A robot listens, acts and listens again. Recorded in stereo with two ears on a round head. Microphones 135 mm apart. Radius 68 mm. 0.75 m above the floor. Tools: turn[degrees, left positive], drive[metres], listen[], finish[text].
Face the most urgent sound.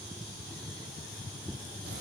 Action: listen[]
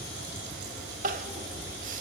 Thought: The crying: about 55° right or 125° right.
Action: turn[-55]
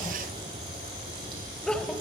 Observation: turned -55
Action: finish[Found it: crying, straight ahead.]